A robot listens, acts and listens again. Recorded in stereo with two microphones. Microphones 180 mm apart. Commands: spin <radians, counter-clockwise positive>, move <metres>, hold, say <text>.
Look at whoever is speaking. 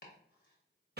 hold
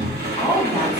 spin 0.52
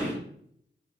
hold
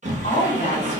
spin 2.44
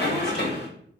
hold
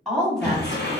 say Facing the woman speaking, 1 to 2 m away.